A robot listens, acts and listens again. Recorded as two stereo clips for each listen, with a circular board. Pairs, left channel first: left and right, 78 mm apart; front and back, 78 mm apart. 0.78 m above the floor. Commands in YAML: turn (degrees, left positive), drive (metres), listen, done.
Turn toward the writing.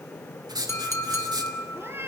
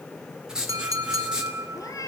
turn: -100
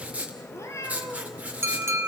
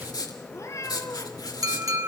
turn: -20
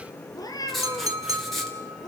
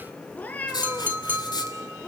done: "Found it: writing, straight ahead."